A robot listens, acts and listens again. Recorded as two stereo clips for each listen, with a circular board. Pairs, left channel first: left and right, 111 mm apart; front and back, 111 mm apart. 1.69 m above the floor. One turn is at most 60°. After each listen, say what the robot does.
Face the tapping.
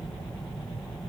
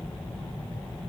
Keep listening.
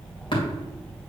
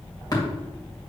Keep listening.
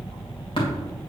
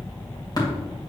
Turn 50° left.
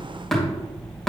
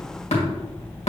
Facing the tapping, 2 to 4 m away.